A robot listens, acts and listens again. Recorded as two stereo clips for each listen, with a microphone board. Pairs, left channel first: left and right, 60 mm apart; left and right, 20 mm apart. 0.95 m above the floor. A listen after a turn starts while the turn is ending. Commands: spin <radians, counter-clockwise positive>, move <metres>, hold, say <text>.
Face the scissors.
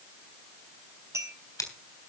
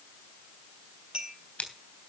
spin 1.57
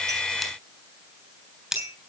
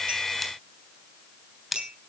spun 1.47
spin -0.17
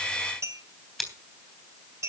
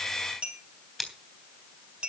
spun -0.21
say Facing the scissors.